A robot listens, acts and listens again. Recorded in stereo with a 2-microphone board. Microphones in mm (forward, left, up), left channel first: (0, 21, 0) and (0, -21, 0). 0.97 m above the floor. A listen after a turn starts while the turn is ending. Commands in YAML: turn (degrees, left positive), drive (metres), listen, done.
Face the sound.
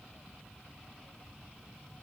listen: true
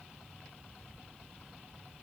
listen: true
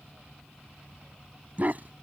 turn: -40
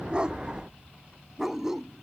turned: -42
done: "Facing the dog barking."